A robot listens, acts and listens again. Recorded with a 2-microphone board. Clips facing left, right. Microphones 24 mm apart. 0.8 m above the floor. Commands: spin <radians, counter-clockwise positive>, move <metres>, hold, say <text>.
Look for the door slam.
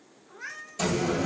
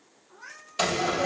spin -0.79
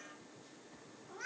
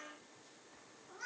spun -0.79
hold
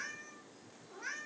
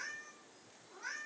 say I heard a door slam, but can't make it out now. It was about straight ahead or 90° right.